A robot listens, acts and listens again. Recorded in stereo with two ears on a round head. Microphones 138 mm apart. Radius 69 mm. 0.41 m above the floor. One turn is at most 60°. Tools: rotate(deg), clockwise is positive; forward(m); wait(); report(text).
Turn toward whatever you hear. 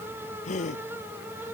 rotate(-50)
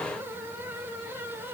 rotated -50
wait()
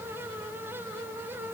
report("I heard a gasp, but can't make it out now. It was about straight ahead or 80° left.")